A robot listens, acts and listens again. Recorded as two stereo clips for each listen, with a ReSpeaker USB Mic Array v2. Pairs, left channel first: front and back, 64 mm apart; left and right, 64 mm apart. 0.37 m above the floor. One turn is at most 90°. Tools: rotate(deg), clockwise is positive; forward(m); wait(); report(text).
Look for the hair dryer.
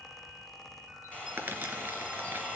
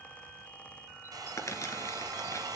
rotate(70)
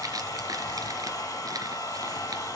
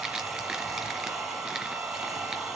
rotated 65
report("Found it: a hair dryer, straight ahead, 2 to 4 m away.")